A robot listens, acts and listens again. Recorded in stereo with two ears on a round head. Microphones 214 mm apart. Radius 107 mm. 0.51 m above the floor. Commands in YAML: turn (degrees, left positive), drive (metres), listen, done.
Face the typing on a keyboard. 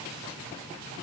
listen: true
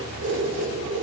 listen: true
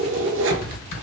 turn: 50
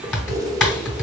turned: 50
done: "Facing the typing on a keyboard, 2 to 4 m away."